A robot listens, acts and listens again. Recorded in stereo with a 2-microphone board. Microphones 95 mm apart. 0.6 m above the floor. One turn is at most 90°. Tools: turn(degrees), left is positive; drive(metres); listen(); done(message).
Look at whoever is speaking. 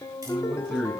turn(degrees=30)
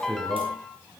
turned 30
turn(degrees=-30)
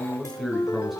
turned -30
done("Found it: a man speaking, straight ahead, over 4 m away.")